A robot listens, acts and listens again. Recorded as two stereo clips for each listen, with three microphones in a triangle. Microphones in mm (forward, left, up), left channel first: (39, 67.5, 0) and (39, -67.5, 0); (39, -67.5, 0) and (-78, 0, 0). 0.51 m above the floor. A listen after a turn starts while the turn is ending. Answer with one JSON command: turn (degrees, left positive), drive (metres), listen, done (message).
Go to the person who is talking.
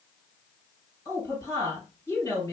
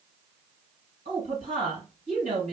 {"turn": 150}
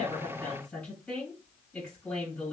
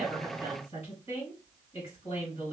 {"drive": 1.0}
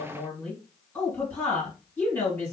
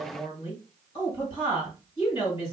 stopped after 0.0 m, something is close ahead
{"turn": 10}
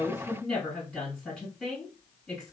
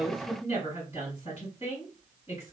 {"done": "Blocked. The woman speaking is further on, straight ahead."}